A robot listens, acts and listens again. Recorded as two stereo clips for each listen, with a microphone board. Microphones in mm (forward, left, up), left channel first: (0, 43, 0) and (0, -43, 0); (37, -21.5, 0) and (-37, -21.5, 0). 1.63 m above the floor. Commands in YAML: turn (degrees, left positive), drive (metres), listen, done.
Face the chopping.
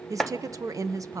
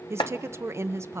done: "Found it: chopping, straight ahead, 1 to 2 m away."